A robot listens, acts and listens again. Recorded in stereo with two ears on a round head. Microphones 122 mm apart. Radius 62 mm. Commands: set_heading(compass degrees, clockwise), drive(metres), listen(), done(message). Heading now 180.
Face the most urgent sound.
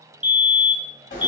set_heading(210)
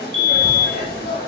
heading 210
set_heading(350)
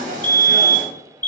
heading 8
set_heading(348)
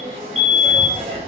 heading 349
done("Facing the fire alarm.")